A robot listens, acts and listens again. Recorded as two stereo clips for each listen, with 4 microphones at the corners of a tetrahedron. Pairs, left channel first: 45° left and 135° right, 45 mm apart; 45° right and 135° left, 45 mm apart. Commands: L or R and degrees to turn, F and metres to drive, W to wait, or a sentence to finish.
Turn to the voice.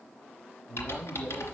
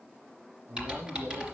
L115
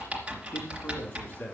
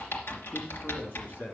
R15
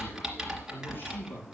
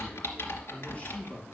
Facing the man speaking, over 4 m away.